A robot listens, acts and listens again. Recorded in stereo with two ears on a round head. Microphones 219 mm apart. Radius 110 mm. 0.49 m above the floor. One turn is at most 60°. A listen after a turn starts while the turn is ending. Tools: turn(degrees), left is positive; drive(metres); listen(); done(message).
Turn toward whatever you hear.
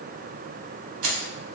turn(degrees=-60)
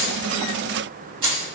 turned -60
turn(degrees=-25)
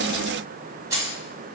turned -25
turn(degrees=-15)
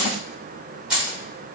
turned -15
done("Found it: keys jangling, straight ahead.")